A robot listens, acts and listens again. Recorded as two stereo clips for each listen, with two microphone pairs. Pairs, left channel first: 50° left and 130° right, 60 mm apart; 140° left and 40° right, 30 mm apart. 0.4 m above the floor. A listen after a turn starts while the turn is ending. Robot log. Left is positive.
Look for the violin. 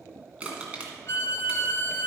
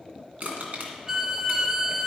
note: The violin: 25° left.
cmd yaw +25
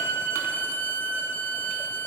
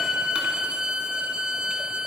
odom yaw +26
end: Facing the violin, under 1 m away.